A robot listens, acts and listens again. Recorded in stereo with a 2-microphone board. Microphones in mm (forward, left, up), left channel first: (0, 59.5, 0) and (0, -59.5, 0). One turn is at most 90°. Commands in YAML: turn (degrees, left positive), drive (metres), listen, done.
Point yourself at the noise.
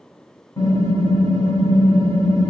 turn: 35
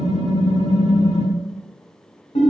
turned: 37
turn: 90
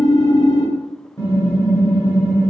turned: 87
turn: 25
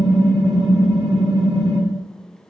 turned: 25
done: "Found it: typing on a keyboard, straight ahead."